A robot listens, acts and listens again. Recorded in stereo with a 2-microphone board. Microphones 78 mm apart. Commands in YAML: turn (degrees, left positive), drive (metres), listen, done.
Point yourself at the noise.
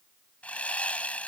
turn: 15
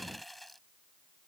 done: "Facing the sawing."